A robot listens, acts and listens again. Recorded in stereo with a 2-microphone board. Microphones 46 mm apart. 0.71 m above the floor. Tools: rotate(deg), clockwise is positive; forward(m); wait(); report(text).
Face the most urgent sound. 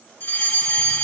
rotate(-50)
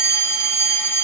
rotate(-80)
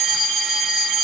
rotate(15)
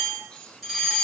report("Found it: a fire alarm, straight ahead.")